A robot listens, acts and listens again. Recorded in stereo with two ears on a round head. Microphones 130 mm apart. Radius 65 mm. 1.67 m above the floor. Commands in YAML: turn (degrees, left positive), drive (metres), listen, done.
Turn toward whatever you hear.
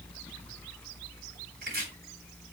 turn: -90
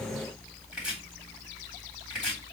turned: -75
done: "Facing the chopping."